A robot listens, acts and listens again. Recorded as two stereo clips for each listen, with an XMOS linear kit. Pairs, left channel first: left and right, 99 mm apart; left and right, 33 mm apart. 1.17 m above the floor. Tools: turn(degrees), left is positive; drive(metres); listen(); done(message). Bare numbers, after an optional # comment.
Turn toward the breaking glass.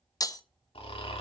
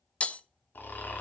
# The breaking glass: about 40° left or 140° left.
turn(40)
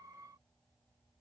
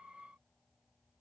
listen()
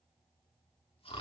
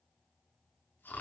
done("I heard breaking glass, but can't make it out now. It was about straight ahead or 100° left.")